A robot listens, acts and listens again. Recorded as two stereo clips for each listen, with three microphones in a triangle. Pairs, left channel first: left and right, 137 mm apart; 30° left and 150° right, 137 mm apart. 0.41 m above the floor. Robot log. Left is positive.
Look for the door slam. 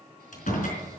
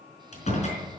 note: The door slam: 65° left.
cmd yaw +65
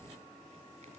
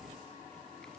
end: I heard a door slam from this way, but can't make it out now.